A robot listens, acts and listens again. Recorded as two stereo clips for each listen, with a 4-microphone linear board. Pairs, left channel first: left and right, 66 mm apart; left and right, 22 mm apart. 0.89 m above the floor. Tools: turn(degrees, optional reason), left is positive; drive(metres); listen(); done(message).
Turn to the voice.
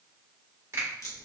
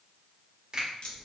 listen()
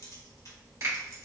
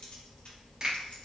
listen()
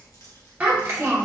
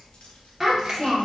turn(degrees=-25, reason="The child speaking: about 25° right or 155° right.")
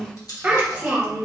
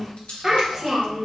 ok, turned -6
turn(degrees=-25, reason="The child speaking: about 25° right or 155° right.")
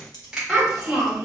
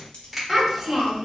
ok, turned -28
done("Facing the child speaking.")